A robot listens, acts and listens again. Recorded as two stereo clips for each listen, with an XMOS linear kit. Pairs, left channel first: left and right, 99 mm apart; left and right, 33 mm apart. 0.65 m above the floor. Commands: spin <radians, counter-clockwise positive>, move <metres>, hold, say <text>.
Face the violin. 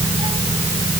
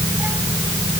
hold
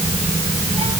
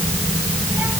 hold
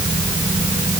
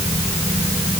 say I can't make out a violin to turn to.